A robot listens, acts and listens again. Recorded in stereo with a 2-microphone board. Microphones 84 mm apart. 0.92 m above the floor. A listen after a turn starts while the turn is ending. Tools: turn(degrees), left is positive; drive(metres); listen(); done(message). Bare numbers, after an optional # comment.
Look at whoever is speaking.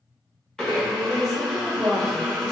turn(30)
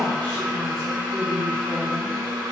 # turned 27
# So it is at 150° left.
turn(150)
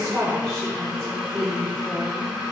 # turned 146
done("Facing the woman speaking, 1 to 2 m away.")